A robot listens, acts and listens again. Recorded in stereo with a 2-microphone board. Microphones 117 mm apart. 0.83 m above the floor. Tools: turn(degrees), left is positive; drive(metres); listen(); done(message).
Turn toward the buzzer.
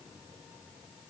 listen()
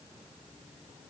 listen()
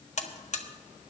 turn(degrees=75)
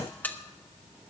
turn(degrees=15)
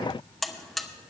done("Facing the buzzer.")